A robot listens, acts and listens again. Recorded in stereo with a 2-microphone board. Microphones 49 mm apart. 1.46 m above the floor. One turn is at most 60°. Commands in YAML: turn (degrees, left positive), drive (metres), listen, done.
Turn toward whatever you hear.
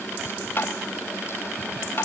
turn: 45
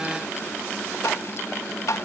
turn: 60
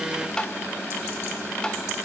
turn: 15
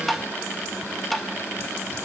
done: "Facing the tapping, 1 to 2 m away."